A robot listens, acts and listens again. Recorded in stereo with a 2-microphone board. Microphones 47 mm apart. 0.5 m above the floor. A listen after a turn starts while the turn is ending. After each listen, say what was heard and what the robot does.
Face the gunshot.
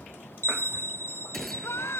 Turn 30° left.
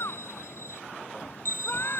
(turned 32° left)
Keep listening.
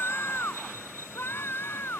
I heard a gunshot, but can't make it out now. It was about 30° right or 145° left.